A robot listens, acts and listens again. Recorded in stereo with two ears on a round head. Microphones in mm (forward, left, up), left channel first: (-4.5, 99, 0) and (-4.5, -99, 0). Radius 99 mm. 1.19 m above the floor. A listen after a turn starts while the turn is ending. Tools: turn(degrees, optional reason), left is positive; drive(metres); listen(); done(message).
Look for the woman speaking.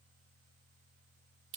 listen()
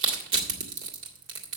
listen()
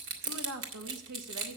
turn(degrees=-90)
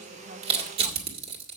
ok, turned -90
listen()
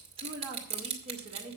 turn(degrees=-30, reason="The woman speaking is now 30° right.")
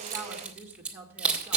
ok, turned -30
turn(degrees=-10, reason="The woman speaking is now 10° right.")
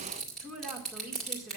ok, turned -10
done("Facing the woman speaking, 1 to 2 m away.")